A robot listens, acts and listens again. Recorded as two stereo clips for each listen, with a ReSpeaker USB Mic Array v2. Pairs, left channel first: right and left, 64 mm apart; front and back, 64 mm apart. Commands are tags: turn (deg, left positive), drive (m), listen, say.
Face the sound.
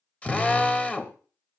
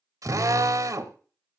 <turn deg="-155"/>
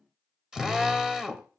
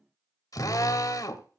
<turn deg="10"/>
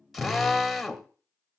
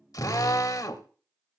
<say>Facing the drill.</say>